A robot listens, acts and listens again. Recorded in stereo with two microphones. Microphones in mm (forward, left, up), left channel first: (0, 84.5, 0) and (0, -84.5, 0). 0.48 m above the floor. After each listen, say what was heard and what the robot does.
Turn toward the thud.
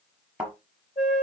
Turn 30° right.
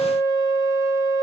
Keep listening.
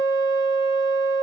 I heard a thud, but can't make it out now. It was about 25° left or 145° right.